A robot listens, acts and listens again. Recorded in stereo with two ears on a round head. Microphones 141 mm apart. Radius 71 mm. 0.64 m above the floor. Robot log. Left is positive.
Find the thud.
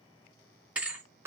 cmd yaw -30
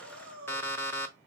cmd idle
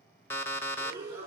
end: I heard a thud, but can't make it out now. It was about 20° left or 140° right.